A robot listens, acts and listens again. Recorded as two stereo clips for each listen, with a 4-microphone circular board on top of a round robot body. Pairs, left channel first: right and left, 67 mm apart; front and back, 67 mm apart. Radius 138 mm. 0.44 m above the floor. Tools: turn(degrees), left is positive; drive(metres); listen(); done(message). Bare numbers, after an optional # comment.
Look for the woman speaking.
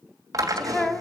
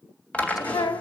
# The woman speaking: 10° right.
turn(-10)
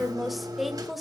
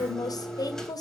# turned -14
done("Facing the woman speaking.")